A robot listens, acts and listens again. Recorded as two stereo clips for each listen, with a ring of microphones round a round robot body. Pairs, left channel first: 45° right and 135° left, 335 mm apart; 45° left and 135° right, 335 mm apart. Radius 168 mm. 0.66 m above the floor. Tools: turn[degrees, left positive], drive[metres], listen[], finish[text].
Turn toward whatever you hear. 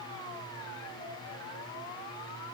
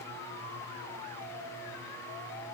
Action: listen[]
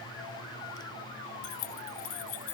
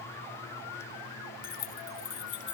Thought: The keys jangling: 15° right.
Action: turn[-15]
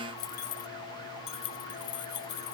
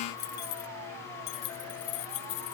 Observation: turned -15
Thought: The keys jangling is now 15° left.
Action: turn[15]
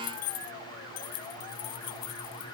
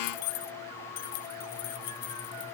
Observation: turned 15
Action: finish[Found it: keys jangling, straight ahead.]